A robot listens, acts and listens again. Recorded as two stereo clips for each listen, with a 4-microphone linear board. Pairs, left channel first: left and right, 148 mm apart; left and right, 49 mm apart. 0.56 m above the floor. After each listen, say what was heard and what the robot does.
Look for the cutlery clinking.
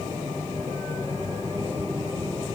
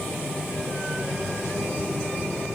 Keep listening.
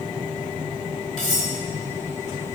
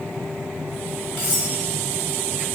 The cutlery clinking: about 50° left or 130° left. Turn 50° left.
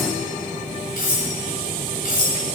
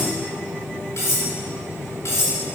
So it is at 75° left. Turn 75° left.
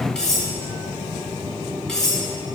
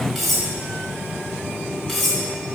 Found it: cutlery clinking, straight ahead.